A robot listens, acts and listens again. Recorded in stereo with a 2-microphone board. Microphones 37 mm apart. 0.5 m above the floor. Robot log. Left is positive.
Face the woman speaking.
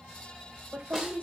note: The woman speaking: about 45° right or 135° right.
cmd yaw -45
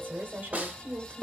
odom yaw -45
note: So it is at 45° right.
cmd yaw -45
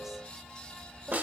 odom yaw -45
cmd idle
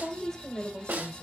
note: The woman speaking is now 30° left.
cmd yaw +30
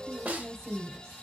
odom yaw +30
note: The woman speaking is now 15° left.
cmd yaw +15
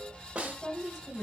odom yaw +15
end: Found it: a woman speaking, straight ahead.